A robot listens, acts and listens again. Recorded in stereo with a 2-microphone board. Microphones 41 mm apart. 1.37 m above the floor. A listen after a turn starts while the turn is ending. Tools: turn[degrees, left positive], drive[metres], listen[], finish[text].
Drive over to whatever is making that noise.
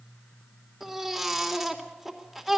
Action: turn[30]
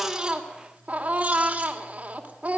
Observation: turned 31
Thought: So it is at 30° right.
Action: turn[-30]
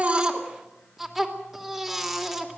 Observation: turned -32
Action: drive[1.0]
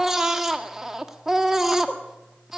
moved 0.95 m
Action: drive[1.0]
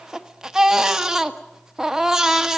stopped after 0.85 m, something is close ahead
Thought: The baby crying is now 10° right.
Action: turn[-10]
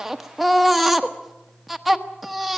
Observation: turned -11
Action: finish[Arrived at the baby crying, straight ahead.]